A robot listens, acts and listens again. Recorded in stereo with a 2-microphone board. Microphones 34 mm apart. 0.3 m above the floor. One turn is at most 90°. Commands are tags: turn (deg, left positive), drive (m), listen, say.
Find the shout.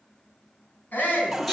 <turn deg="55"/>
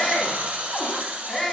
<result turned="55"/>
<turn deg="10"/>
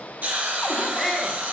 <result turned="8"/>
<say>Found it: a shout, straight ahead.</say>